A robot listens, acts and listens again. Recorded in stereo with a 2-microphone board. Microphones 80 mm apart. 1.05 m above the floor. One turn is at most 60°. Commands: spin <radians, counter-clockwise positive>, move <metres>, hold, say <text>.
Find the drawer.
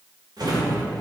spin -1.05
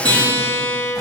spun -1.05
hold
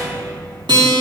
spin -0.87
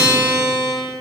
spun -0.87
hold
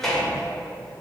say Facing the drawer, 2 to 4 m away.